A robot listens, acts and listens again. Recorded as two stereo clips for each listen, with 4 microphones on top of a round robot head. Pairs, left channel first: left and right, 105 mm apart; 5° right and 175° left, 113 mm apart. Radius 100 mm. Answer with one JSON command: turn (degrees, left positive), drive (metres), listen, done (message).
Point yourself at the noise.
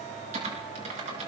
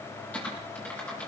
{"turn": -85}
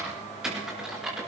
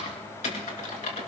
{"done": "Facing the typing on a keyboard, over 4 m away."}